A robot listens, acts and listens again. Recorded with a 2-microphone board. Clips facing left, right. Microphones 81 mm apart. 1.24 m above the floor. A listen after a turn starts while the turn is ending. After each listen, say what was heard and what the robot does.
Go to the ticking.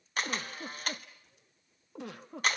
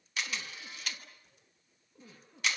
Keep listening.
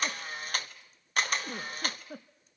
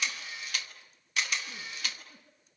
Keep listening.
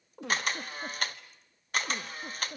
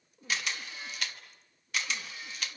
I can't make out ticking, only a giggle and a camera shutter.